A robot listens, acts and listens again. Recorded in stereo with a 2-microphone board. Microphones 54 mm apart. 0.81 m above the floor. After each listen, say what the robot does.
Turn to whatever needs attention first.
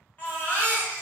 Turn 35° left.
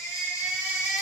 Turn 110° left.
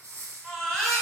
Turn 10° left.
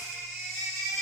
Facing the baby crying.